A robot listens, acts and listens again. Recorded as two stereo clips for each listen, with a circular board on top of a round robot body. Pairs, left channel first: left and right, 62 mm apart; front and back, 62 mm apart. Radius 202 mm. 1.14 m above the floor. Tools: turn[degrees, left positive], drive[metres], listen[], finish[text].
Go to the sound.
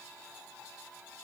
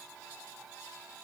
Action: listen[]
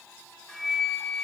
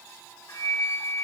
Thought: The flute: 10° left.
Action: turn[10]
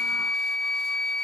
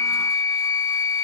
Action: drive[1.0]
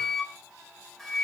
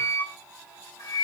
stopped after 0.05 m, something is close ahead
Action: finish[Something is in my way. I am facing the flute but have not reached it.]